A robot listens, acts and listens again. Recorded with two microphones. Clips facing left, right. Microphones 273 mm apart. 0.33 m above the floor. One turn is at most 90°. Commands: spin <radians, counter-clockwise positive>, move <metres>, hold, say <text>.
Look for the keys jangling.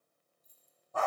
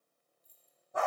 spin -1.22
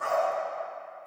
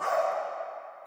hold
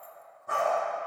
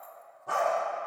hold
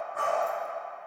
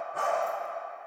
say I heard keys jangling, but can't make it out now. It was about straight ahead or 40° right.